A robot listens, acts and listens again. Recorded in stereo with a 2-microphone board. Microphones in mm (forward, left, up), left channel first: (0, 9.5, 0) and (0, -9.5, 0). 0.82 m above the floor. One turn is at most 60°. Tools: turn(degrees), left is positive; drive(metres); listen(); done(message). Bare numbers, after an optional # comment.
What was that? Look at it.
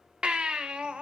turn(-60)
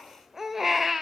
# So it is at 20° right.
turn(-20)
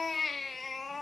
done("Facing the baby crying, 1 to 2 m away.")